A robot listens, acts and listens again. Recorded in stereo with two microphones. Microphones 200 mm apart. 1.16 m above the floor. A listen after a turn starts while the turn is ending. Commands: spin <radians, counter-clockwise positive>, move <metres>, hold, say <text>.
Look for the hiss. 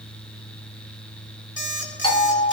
hold
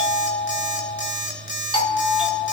hold
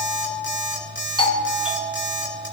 say I can't make out a hiss to turn to.